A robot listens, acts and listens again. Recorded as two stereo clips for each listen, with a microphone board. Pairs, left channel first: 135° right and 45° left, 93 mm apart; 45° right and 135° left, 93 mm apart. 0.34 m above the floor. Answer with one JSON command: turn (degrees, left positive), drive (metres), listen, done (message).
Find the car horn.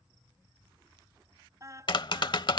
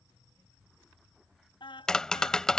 {"turn": -10}
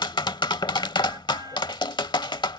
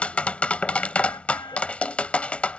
{"listen": true}
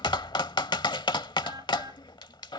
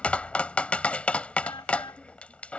{"listen": true}
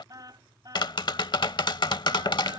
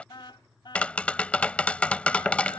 {"done": "Facing the car horn."}